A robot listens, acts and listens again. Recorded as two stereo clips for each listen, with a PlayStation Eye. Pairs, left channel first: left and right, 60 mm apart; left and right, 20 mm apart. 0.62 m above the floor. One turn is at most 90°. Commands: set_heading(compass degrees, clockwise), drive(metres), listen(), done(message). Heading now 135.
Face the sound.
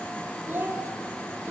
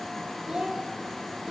set_heading(170)
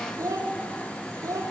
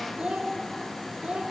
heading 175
set_heading(265)
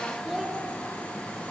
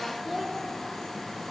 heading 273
done("Facing the child speaking, 2 to 4 m away.")